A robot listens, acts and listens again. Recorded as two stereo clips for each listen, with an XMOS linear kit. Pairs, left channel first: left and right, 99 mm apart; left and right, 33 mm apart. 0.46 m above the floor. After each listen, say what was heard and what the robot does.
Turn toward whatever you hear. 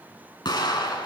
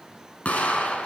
The explosion: about 50° left or 130° left. Turn 50° left.
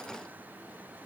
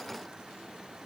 Keep listening.
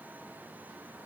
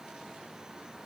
I heard an explosion, but can't make it out now. It was about straight ahead or 80° left.